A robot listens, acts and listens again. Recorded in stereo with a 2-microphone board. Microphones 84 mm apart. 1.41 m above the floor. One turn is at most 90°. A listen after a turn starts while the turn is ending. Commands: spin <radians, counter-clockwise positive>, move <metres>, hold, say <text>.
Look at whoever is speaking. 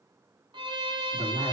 spin 1.22
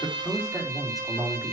say Found it: a man speaking, straight ahead, over 4 m away.